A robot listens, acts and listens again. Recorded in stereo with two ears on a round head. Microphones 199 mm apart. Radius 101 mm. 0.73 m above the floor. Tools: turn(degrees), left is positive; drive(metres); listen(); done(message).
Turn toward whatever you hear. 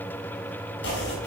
turn(degrees=55)
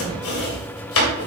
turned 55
turn(degrees=65)
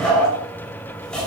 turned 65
done("Found it: chopping, straight ahead, 2 to 4 m away.")